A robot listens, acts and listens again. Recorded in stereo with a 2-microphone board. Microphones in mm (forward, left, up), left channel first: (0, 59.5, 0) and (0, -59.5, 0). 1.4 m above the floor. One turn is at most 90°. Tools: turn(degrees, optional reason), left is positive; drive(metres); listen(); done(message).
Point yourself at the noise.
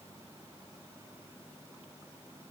listen()
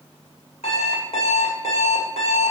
turn(degrees=65, reason="The alarm clock: about 65° left or 115° left.")
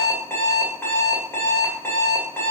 turn(degrees=20, reason="So it is at 20° left.")
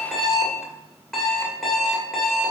done("Facing the alarm clock.")